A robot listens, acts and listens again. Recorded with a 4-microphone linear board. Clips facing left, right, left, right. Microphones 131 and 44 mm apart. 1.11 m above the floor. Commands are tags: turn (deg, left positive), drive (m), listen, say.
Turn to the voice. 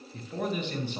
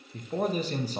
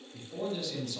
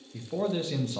<turn deg="-40"/>
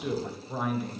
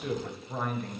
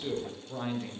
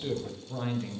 <say>Found it: a man speaking, straight ahead.</say>